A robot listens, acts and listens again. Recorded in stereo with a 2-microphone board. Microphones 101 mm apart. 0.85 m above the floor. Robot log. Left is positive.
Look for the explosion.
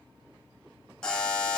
cmd idle
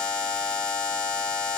cmd idle
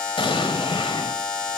note: The explosion: about 60° left or 120° left.
cmd yaw +60
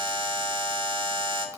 cmd idle
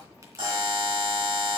end: I heard an explosion, but can't make it out now. It was about straight ahead or 60° left.